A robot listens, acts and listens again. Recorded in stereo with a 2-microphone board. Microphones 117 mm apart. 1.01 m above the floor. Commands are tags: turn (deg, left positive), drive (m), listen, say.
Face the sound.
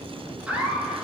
<turn deg="-30"/>
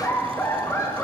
<turn deg="25"/>
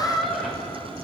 <say>Found it: laughter, straight ahead, 1 to 2 m away.</say>